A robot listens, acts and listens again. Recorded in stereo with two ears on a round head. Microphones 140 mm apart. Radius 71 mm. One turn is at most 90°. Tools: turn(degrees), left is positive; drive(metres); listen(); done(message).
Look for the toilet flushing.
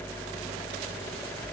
listen()
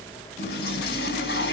turn(degrees=90)
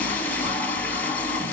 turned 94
turn(degrees=10)
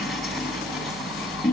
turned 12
done("Facing the toilet flushing.")